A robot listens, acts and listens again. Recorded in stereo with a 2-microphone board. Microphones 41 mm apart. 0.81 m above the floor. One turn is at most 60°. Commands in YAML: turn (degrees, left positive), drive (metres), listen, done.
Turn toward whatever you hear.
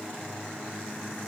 listen: true
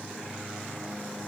listen: true
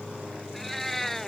turn: 30
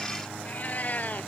turn: 60
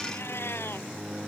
turn: 60
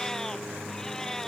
turn: 15
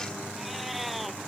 listen: true
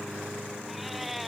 done: "Found it: a cat meowing, straight ahead."